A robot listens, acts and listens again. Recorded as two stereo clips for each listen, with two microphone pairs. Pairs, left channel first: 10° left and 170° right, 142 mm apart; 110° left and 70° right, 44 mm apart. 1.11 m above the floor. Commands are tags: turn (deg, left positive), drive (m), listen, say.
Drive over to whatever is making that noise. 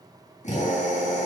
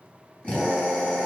<turn deg="45"/>
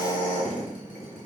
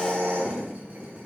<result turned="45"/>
<turn deg="-10"/>
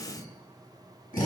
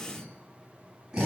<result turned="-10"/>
<drive m="1.0"/>
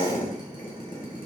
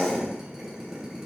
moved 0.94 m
<drive m="1.0"/>
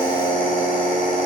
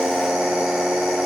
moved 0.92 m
<turn deg="10"/>
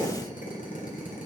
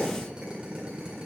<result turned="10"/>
<drive m="1.0"/>
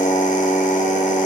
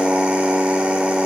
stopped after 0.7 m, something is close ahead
<say>I am next to the drill.</say>